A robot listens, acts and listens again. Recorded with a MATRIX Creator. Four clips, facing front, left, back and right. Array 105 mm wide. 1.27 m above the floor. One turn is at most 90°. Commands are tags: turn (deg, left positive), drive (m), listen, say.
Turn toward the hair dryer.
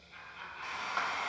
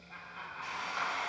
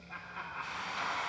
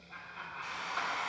<turn deg="50"/>
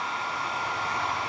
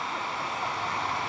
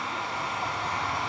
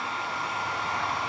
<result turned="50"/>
<say>Facing the hair dryer.</say>